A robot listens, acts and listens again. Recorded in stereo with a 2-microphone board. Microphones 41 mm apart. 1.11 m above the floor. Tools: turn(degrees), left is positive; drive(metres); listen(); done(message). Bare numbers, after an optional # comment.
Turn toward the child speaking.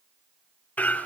listen()
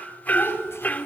turn(90)
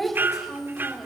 done("Found it: a child speaking, straight ahead.")